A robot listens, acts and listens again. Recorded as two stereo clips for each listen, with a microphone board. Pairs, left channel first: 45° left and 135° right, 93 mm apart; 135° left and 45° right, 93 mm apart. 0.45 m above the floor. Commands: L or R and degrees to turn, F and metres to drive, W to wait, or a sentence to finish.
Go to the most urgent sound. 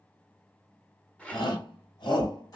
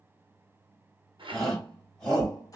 L55
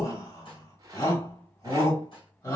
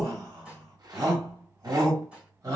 F1.0
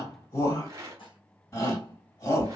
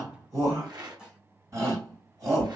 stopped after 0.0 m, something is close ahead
Blocked. The shout is further on, straight ahead.